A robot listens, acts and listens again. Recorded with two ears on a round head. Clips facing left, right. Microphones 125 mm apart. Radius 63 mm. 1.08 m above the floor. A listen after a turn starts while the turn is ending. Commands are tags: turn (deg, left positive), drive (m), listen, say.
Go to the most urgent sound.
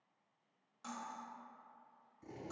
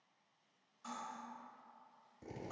<listen/>
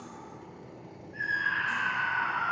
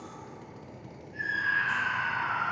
<turn deg="-20"/>
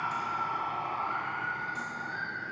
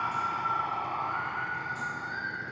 <drive m="1.0"/>
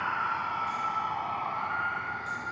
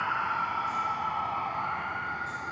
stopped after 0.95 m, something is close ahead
<turn deg="-10"/>
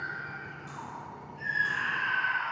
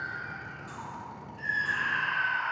<say>I am next to the scream.</say>